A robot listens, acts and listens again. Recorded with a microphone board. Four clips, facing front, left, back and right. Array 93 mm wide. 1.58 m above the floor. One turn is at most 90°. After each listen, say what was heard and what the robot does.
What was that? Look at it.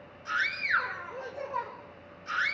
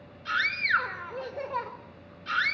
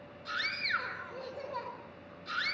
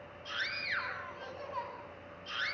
The scream: 70° left. Turn 70° left.
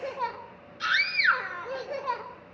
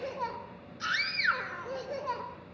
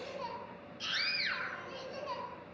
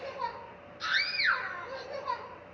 The scream is now 15° left. Turn 15° left.
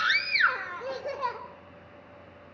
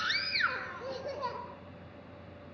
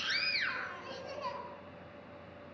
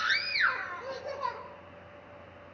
Found it: a scream, straight ahead, over 4 m away.